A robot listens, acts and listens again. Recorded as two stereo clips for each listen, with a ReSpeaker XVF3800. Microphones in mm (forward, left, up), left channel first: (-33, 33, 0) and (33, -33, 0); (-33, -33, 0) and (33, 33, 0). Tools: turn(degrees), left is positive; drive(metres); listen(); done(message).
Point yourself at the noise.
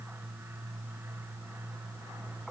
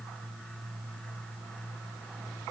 listen()
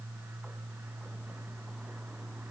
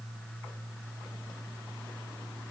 listen()
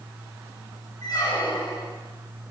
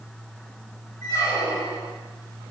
turn(degrees=175)
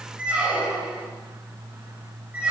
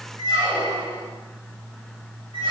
turn(degrees=30)
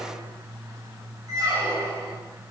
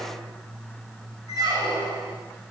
done("Found it: a squeak, straight ahead, 2 to 4 m away.")